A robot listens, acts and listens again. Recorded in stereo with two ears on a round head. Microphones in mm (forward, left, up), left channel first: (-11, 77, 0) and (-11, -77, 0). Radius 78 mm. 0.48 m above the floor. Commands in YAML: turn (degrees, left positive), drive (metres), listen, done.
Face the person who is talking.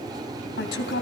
turn: 70
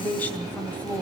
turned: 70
turn: 10
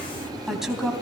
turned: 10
done: "Facing the woman speaking, 2 to 4 m away."